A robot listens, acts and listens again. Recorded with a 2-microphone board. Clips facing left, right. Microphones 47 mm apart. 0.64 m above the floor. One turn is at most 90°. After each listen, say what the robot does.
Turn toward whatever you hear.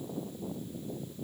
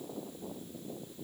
Keep listening.
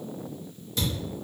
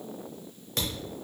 Turn 65° right.
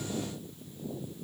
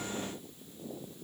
Keep listening.
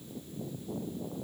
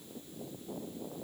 I heard a thud, but can't make it out now. It was about straight ahead or 50° right.